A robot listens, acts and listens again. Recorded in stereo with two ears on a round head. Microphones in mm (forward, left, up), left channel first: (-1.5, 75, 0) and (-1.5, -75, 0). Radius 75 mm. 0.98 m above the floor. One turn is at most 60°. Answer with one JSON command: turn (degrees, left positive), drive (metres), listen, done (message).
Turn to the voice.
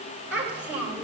{"turn": -30}
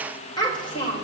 {"turn": 30}
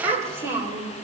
{"turn": -10}
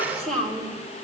{"turn": 10}
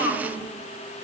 {"turn": 15}
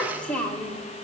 {"turn": 10}
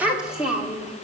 {"done": "Facing the child speaking."}